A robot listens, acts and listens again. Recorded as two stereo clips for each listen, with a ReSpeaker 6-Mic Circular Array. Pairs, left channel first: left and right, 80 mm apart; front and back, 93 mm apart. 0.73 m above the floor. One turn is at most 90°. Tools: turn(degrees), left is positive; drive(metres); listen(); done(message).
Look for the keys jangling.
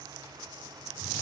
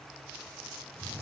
listen()
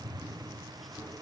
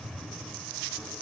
listen()
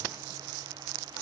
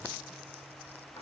done("I can't make out keys jangling, only a drawer.")